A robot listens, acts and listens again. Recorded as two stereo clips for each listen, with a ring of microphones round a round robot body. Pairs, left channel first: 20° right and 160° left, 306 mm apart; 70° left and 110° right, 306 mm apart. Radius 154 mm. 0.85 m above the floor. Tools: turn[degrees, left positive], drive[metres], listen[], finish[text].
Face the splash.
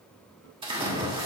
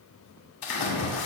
Thought: The splash: 85° left.
Action: turn[85]
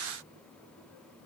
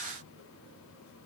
Action: finish[Facing where the splash came from. I can't hear it now.]